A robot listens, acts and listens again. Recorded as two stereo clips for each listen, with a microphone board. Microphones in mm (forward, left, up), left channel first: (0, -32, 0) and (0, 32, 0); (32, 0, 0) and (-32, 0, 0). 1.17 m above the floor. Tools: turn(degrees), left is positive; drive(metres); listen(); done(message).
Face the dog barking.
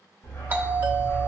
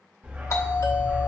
turn(degrees=-130)
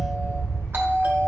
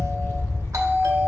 turn(degrees=-40)
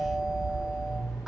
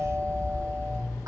turn(degrees=-15)
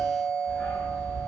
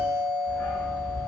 turn(degrees=-10)
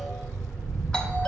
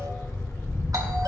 done("Facing the dog barking.")